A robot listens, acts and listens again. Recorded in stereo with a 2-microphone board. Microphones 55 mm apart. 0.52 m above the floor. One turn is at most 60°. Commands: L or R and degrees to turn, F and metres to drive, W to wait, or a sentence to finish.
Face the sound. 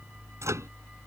R60
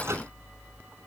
R60
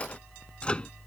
L20
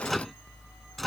Found it: a microwave, straight ahead.